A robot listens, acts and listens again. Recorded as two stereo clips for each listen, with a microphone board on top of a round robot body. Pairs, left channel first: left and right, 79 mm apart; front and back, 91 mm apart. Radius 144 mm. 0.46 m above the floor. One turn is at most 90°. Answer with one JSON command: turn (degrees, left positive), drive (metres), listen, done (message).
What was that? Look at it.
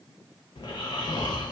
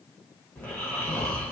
{"turn": 75}
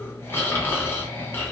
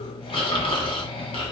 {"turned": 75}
{"turn": 25}
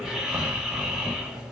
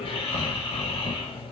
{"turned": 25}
{"turn": -10}
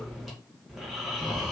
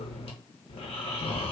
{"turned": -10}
{"done": "Facing the snoring."}